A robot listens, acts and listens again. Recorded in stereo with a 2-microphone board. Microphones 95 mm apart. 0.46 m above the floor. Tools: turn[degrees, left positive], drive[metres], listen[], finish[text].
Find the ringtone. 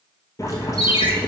Thought: The ringtone: about 70° left or 110° left.
Action: turn[70]
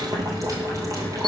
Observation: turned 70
Action: listen[]
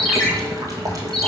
Action: finish[Found it: a ringtone, straight ahead.]